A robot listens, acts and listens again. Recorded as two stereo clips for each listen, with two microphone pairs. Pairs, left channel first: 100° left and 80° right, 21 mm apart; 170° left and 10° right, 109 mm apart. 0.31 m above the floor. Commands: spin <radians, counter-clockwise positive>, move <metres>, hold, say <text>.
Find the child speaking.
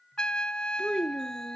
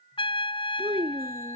spin -0.26
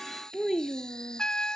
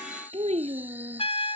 say Facing the child speaking.